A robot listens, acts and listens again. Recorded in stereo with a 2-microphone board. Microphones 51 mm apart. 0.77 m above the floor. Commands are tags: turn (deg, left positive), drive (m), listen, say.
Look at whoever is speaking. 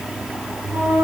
<listen/>
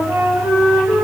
<listen/>
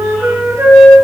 <say>I can't make out anyone speaking to turn to.</say>